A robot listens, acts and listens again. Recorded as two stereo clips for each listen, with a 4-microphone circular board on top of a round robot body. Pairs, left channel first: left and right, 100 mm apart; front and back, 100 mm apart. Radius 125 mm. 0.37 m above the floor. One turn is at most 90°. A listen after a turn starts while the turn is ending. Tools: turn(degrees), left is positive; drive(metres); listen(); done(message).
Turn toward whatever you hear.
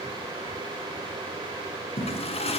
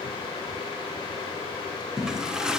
turn(degrees=90)
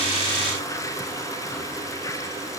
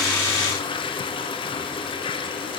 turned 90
turn(degrees=35)
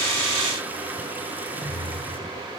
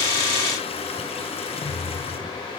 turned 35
turn(degrees=-15)
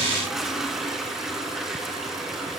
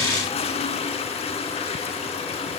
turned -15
done("Found it: a toilet flushing, straight ahead, over 4 m away.")